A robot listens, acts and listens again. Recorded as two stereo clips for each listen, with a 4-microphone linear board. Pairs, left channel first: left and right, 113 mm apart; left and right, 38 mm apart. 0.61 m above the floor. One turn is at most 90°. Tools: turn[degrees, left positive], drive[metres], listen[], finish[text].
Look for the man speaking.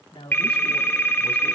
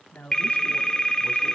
Thought: The man speaking: about 55° left or 125° left.
Action: turn[55]
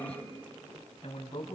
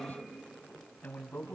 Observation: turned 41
Thought: So it is at 60° left.
Action: turn[60]
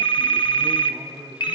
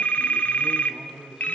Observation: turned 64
Thought: The man speaking is now 10° right.
Action: turn[-10]
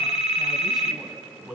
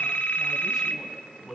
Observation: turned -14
Action: finish[Found it: a man speaking, straight ahead.]